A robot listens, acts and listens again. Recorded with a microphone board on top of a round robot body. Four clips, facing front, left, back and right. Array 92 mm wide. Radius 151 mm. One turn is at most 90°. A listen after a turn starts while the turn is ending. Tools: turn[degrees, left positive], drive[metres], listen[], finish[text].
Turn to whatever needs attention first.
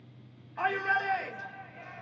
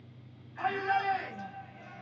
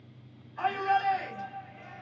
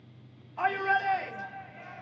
Thought: The shout: 35° right.
Action: turn[-35]
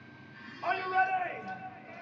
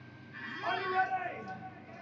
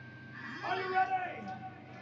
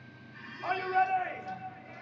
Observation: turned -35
Action: finish[Found it: a shout, straight ahead, 2 to 4 m away.]